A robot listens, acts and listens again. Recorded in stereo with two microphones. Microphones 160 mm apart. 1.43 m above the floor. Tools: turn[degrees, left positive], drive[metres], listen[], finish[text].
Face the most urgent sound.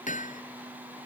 Action: listen[]
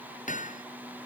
Action: listen[]
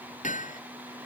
Action: finish[I can't make out anything urgent, only hammering.]